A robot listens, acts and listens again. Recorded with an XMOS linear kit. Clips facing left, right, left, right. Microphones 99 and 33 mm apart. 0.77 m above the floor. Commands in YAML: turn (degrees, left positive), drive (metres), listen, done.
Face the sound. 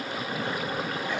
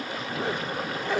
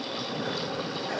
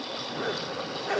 turn: -90
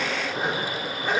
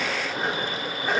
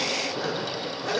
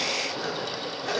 done: "Found it: a zipper, straight ahead, 1 to 2 m away."